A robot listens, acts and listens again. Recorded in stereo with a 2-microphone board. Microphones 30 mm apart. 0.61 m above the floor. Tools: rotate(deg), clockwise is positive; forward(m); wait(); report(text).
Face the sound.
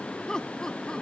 rotate(-25)
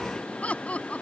rotate(-130)
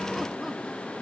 wait()
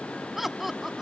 rotate(10)
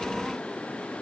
wait()
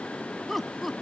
report("Facing the laughter.")